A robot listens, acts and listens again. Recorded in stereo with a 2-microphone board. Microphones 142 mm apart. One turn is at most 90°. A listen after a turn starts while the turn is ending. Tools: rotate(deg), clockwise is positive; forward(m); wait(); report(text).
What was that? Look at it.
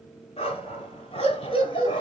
rotate(-35)
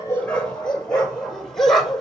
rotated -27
report("Found it: a dog barking, straight ahead, over 4 m away.")